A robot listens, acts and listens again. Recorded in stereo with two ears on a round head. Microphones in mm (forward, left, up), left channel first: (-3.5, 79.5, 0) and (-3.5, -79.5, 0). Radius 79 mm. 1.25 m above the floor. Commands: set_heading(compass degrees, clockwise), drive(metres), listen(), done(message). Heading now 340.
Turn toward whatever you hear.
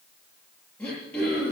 set_heading(310)
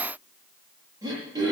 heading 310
set_heading(330)
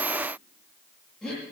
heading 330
done("Found it: throat clearing, straight ahead, over 4 m away.")